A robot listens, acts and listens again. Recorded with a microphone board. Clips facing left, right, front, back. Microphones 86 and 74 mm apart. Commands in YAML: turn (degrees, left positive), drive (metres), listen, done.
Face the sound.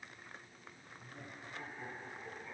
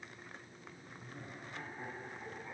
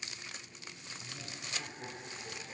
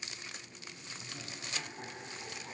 turn: -165
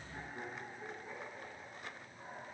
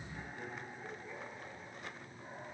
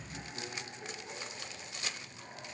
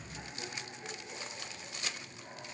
turn: 35
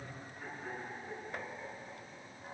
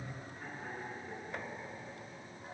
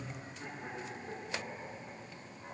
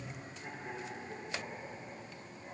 done: "Facing the laughter, over 4 m away."